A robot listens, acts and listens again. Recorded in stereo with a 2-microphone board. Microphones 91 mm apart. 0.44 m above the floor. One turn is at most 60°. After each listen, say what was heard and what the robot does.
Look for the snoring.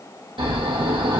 Turn 60° right.
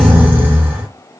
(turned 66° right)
So it is at 20° right. Turn 20° right.
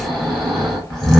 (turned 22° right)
Facing the snoring.